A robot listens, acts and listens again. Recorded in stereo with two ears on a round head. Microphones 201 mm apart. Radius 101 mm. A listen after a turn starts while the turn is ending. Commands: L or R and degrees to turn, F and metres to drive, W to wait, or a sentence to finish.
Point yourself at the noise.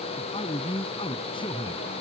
L25
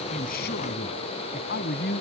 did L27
L135
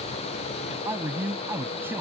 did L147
R10
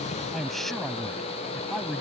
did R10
Facing the man speaking.